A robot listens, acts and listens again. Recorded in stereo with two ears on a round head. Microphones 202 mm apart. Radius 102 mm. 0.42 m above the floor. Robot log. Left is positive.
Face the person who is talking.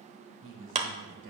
note: The man speaking: about 60° right or 120° right.
cmd yaw -60
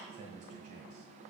note: So it is at 40° right.
cmd yaw -40
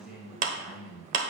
end: Facing the man speaking, 1 to 2 m away.